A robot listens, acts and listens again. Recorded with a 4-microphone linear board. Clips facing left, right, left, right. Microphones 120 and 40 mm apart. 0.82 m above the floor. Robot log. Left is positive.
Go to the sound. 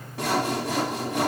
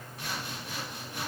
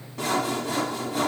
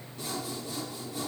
note: The sawing: about 70° left or 110° left.
cmd yaw +70
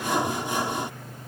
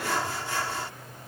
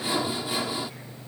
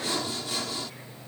note: So it is at 20° left.
cmd yaw +20
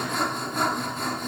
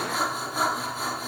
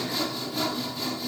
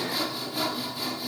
cmd fwd 1.0
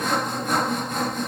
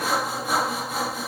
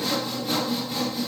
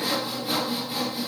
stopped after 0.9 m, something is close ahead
end: Arrived at the sawing, straight ahead.